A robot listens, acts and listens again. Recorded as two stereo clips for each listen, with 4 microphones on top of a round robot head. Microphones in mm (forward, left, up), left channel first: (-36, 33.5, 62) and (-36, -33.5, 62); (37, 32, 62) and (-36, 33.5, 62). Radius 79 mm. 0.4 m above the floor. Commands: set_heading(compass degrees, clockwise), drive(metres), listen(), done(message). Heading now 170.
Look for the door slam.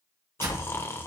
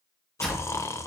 set_heading(250)
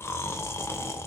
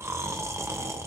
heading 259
set_heading(249)
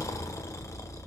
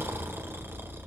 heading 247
done("Facing where the door slam came from. I can't hear it now.")